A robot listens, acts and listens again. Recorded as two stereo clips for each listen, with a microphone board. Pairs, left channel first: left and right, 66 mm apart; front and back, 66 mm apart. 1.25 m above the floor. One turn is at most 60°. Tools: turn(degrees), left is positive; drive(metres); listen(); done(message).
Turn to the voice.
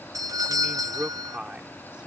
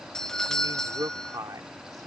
turn(degrees=-60)
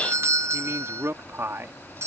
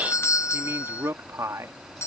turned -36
turn(degrees=-60)
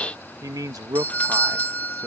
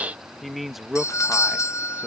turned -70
turn(degrees=-60)
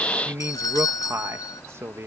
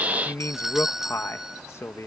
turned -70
turn(degrees=-45)
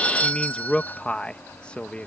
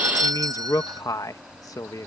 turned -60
turn(degrees=15)
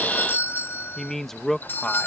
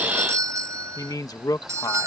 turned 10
done("Found it: a man speaking, straight ahead.")